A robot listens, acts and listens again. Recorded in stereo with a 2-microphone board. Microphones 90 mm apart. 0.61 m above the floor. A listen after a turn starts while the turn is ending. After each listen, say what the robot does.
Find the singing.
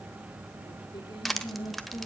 Turn 70° left.
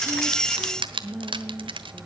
Turn 15° left.
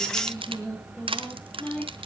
Turn 15° left.
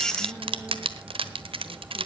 Keep listening.
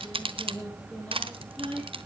Turn 15° left.
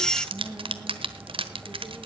Facing the singing, over 4 m away.